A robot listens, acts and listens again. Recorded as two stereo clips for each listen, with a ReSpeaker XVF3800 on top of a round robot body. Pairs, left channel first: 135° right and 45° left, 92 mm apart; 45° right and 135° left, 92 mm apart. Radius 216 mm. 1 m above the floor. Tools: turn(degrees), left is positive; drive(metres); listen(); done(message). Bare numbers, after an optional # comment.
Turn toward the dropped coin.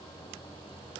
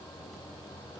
listen()
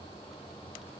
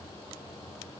listen()
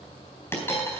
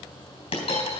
# The dropped coin: 70° right.
turn(-70)
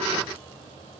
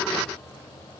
done("Facing where the dropped coin came from. I can't hear it now.")